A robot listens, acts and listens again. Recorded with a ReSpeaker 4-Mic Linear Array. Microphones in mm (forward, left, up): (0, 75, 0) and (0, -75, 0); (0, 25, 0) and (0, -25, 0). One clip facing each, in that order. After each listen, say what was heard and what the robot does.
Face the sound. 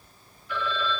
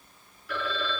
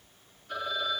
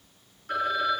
Turn 90° right.
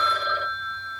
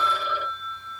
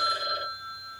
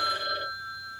So it is at 10° right. Turn 10° right.
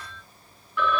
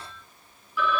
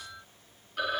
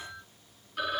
Facing the phone ringing, 2 to 4 m away.